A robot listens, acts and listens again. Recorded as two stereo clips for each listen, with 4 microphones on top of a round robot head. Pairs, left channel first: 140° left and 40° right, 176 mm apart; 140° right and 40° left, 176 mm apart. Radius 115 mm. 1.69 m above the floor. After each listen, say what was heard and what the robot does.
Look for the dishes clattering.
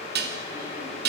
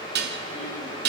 Facing the dishes clattering, 2 to 4 m away.